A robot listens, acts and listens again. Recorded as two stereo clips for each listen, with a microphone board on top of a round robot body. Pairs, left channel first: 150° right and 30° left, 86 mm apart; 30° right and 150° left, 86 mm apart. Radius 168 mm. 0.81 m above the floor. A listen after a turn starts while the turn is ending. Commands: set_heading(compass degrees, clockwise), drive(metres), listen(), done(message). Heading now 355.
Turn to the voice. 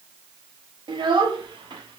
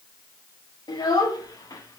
set_heading(345)
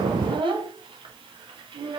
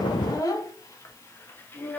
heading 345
set_heading(310)
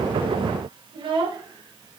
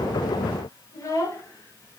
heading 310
set_heading(290)
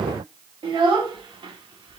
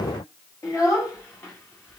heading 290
set_heading(265)
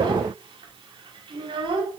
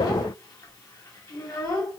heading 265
set_heading(255)
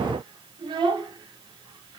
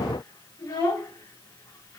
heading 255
done("Facing the child speaking, 1 to 2 m away.")